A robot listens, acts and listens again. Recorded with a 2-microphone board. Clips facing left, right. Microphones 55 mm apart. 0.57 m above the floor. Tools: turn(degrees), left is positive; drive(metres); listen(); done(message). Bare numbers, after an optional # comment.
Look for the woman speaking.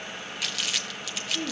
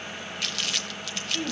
# The woman speaking: about 55° right or 125° right.
turn(-55)
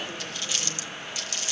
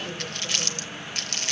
listen()
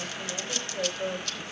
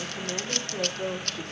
# So it is at 75° right.
turn(-75)
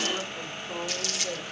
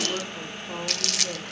# The woman speaking is now 40° right.
turn(-40)
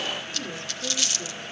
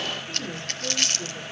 # The woman speaking is now 15° right.
turn(-15)
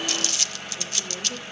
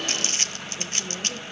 done("Facing the woman speaking, over 4 m away.")